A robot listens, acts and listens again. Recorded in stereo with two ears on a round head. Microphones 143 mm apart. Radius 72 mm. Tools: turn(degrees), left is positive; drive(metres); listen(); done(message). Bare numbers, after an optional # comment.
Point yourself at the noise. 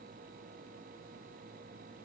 listen()
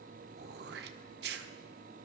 # The throat clearing: about 75° right or 105° right.
turn(-75)
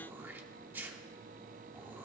# So it is at 15° right.
turn(-15)
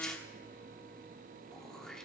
done("Found it: throat clearing, straight ahead.")